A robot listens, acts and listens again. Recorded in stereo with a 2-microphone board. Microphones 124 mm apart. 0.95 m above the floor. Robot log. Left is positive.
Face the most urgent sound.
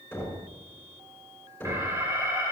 note: The alarm: about 25° right or 155° right.
cmd yaw -25
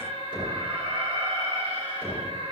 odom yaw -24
note: So it is at 130° right.
cmd yaw -130
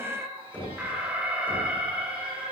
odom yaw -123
note: The alarm is now 10° right.
cmd yaw -10
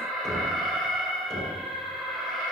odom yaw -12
end: Facing the alarm.